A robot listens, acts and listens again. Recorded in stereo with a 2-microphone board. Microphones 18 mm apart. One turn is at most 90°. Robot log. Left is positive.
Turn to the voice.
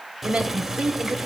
cmd yaw -90
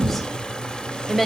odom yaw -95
end: Found it: a woman speaking, straight ahead, 2 to 4 m away.